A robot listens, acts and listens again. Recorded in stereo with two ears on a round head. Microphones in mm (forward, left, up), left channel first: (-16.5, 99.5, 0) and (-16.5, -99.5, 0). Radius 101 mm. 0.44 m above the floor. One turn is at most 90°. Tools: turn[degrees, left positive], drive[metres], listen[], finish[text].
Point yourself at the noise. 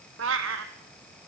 Thought: The cat meowing: about 60° right or 120° right.
Action: turn[-60]
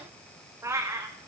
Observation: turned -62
Thought: So it is at 15° right.
Action: turn[-15]
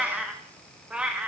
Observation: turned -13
Action: finish[Found it: a cat meowing, straight ahead.]